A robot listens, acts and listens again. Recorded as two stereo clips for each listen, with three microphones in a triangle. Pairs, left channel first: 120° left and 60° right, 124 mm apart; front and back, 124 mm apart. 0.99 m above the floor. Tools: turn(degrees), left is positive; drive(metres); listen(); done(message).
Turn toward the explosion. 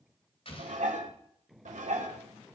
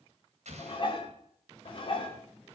turn(degrees=155)
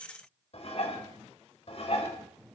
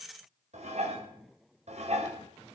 done("I heard an explosion from this way, but can't make it out now.")